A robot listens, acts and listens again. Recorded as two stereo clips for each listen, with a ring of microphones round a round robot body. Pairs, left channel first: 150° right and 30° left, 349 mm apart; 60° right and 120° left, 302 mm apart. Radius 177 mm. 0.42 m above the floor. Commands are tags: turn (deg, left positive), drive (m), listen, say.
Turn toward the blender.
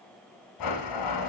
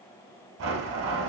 <turn deg="175"/>
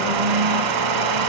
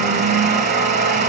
<turn deg="65"/>
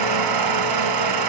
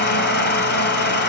<say>Facing the blender, 1 to 2 m away.</say>